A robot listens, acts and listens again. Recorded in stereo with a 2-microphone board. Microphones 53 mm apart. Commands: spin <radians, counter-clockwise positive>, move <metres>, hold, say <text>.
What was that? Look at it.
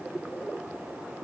hold
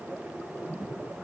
hold
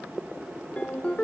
spin 0.44
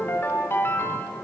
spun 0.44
spin 2.27
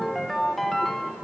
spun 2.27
say Found it: a ringtone, straight ahead, 2 to 4 m away.